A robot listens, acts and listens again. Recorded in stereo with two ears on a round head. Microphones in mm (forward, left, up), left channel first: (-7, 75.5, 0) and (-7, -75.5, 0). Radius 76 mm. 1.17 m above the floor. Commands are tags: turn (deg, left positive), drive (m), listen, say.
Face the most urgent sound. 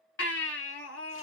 <turn deg="90"/>
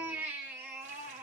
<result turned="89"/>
<turn deg="-10"/>
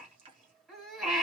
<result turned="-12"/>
<say>Facing the baby crying, 1 to 2 m away.</say>